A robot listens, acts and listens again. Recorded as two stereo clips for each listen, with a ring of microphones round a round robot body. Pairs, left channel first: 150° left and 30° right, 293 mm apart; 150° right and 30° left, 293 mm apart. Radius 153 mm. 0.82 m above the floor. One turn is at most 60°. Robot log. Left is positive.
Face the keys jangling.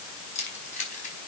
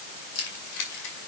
note: The keys jangling: 145° right.
cmd yaw -60
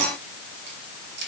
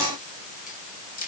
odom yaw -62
note: The keys jangling is now 85° right.
cmd yaw -60
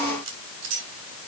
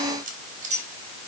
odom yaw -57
note: The keys jangling is now 35° right.
cmd yaw -35
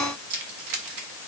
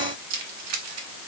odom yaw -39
note: The keys jangling is now 10° right.
cmd yaw -10
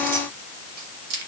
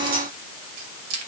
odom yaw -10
note: The keys jangling is now 10° right.
cmd yaw -10
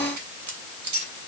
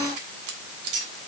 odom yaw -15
end: Facing the keys jangling.